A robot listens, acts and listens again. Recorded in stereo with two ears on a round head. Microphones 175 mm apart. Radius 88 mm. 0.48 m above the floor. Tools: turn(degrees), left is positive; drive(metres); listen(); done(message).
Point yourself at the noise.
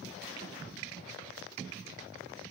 listen()
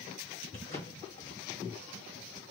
turn(degrees=35)
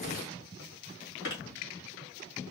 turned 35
turn(degrees=110)
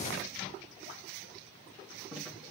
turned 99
turn(degrees=10)
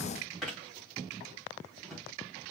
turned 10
done("Found it: a drawer, straight ahead.")